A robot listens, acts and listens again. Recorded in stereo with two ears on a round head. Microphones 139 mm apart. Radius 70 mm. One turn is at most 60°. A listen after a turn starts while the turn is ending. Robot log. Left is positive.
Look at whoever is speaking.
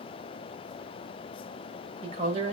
note: The woman speaking: about 45° right or 135° right.
cmd yaw -45
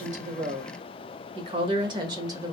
note: So it is at 25° right.
cmd yaw -25
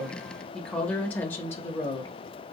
note: The woman speaking is now 25° left.
cmd yaw +25
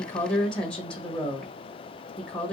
end: Found it: a woman speaking, straight ahead.